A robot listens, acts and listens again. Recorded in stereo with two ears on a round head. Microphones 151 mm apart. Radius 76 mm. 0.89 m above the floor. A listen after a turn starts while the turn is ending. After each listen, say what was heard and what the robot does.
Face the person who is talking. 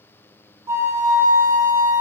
Keep listening.
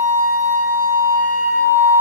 Keep listening.
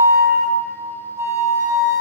I can't make out anyone speaking to turn to.